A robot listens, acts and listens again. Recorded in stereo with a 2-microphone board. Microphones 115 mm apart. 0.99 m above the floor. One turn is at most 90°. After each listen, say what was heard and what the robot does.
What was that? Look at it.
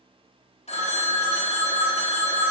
The phone ringing: about 70° left or 110° left. Turn 70° left.
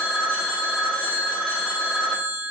Found it: a phone ringing, straight ahead, under 1 m away.